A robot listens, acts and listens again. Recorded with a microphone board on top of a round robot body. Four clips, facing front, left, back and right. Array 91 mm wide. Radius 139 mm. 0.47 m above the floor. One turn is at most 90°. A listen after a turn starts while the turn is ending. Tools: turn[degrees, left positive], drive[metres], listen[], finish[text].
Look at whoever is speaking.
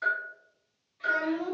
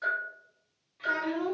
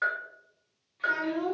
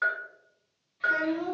Thought: The child speaking: 120° left.
Action: turn[90]
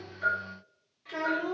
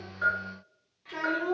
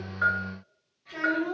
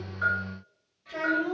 Thought: The child speaking is now 60° left.
Action: turn[60]
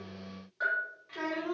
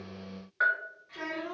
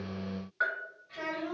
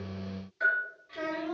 Thought: The child speaking is now 15° left.
Action: turn[15]
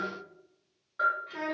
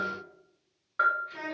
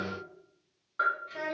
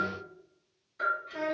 Action: finish[Facing the child speaking, 1 to 2 m away.]